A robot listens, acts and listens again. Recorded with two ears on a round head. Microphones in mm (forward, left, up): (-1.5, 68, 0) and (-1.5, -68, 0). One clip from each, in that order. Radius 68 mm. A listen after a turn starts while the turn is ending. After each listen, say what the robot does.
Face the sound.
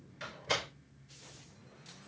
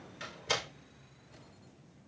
Turn 30° right.
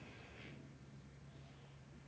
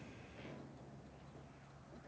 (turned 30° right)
Keep listening.
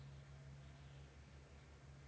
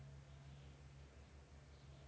I heard a door slam, but can't make it out now. It was about straight ahead or 120° right.